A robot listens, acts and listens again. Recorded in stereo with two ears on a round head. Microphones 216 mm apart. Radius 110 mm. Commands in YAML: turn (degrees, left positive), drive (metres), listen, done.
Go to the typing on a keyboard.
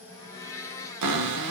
listen: true
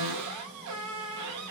listen: true
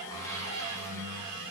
done: "I can't make out typing on a keyboard, only a blender and a cupboard door."